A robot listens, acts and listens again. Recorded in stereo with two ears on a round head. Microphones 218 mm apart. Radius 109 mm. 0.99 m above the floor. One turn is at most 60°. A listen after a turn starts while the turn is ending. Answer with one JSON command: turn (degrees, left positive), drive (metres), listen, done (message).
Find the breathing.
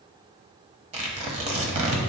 {"listen": true}
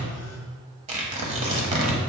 {"listen": true}
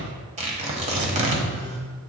{"done": "I can't make out breathing to turn to."}